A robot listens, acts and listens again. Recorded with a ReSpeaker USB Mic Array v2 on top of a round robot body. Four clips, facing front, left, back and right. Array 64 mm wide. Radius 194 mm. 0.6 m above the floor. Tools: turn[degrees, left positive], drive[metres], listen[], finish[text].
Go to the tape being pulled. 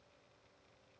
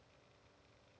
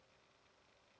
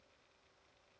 Action: listen[]
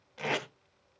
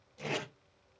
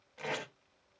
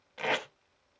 Thought: The tape being pulled: 75° right.
Action: turn[-75]
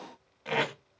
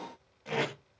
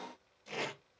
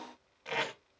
Thought: The tape being pulled is now 10° right.
Action: turn[-10]
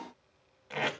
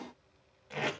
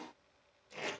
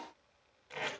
Action: drive[1.0]
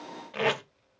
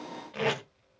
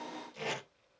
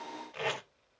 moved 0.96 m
Thought: The tape being pulled is now 10° left.
Action: turn[10]
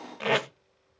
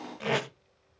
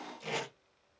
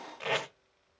Action: drive[1.0]
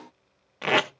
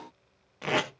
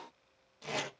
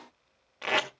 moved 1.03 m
Action: drive[1.0]
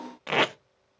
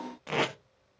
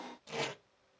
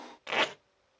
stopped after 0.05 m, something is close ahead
Action: finish[Arrived at the tape being pulled, straight ahead.]